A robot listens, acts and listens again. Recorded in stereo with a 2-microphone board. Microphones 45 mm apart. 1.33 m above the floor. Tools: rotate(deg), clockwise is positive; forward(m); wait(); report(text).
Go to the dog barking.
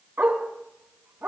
rotate(60)
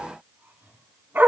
rotate(55)
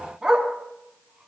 rotate(20)
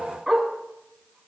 forward(1.0)
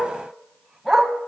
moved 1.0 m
rotate(10)
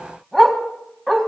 forward(1.0)
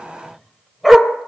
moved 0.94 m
forward(1.0)
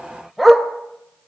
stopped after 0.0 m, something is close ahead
report("Arrived at the dog barking, straight ahead.")